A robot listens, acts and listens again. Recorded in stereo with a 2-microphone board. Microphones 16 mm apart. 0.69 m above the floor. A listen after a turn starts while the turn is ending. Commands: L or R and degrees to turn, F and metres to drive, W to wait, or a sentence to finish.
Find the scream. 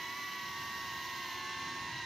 W
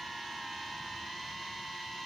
W
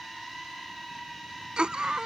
R75
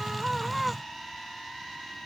Facing the scream.